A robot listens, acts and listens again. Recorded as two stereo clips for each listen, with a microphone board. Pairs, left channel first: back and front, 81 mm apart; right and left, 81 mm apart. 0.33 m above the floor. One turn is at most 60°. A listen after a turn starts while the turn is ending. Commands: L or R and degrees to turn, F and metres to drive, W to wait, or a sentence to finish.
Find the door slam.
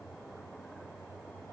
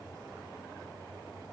W
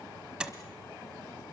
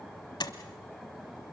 R60
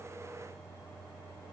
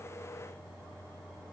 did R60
R20
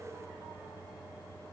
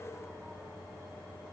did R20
Facing where the door slam came from. I can't hear it now.